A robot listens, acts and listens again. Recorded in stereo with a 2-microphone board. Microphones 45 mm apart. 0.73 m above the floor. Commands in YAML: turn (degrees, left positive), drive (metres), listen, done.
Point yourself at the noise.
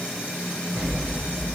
turn: -30
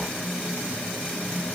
listen: true
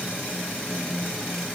done: "I heard an explosion, but can't make it out now. It was about 20° left or 140° right."